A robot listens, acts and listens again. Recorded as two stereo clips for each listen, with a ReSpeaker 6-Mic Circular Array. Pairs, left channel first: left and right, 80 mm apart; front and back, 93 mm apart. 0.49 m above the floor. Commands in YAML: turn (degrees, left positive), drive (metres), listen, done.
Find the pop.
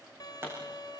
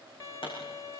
turn: -25
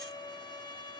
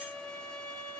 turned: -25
done: "Facing where the pop came from. I can't hear it now."